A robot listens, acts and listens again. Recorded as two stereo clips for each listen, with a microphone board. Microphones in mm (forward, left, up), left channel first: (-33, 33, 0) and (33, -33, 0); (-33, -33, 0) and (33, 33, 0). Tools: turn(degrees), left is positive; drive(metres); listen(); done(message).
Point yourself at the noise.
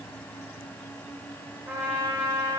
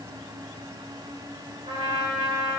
turn(degrees=25)
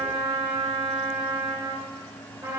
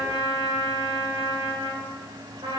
turn(degrees=10)
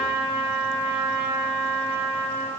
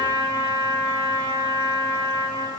done("Found it: a trumpet, straight ahead.")